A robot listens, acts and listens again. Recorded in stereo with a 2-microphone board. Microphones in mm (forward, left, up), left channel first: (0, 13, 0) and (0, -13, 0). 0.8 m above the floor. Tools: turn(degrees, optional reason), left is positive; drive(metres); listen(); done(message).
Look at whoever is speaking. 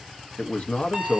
turn(degrees=55, reason="The man speaking: about 55° left or 125° left.")
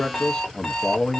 turn(degrees=40, reason="So it is at 40° left.")
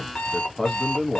turn(degrees=15, reason="The man speaking is now 15° left.")
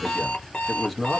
done("Facing the man speaking, under 1 m away.")